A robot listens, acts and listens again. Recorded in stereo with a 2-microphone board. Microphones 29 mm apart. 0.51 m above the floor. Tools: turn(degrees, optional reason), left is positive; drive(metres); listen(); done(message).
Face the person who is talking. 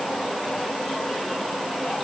listen()
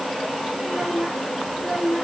turn(degrees=-40, reason="The child speaking: about 40° right or 140° right.")
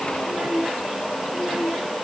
turn(degrees=-110, reason="So it is at 110° right.")
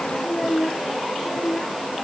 turn(degrees=15, reason="The child speaking is now 15° left.")
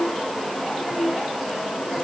done("Facing the child speaking.")